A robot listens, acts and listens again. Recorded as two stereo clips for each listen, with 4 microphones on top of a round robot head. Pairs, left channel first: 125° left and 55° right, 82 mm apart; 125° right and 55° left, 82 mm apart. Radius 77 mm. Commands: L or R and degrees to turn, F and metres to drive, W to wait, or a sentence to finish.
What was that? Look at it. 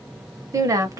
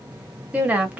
R15
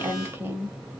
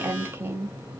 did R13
Found it: a woman speaking, straight ahead.